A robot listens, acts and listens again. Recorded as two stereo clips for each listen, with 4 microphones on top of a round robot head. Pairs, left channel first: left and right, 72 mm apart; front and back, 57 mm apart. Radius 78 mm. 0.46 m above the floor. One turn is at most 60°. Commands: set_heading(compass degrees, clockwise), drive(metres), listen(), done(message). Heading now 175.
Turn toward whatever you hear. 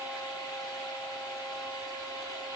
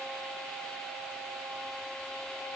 listen()
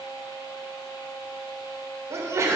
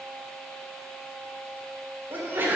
set_heading(235)
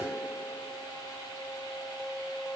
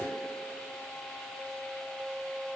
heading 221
set_heading(281)
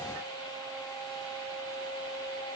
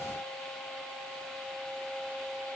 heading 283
set_heading(308)
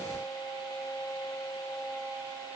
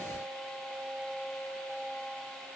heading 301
set_heading(311)
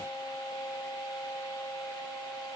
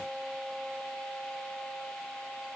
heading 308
done("Facing where the sneeze came from. I can't hear it now.")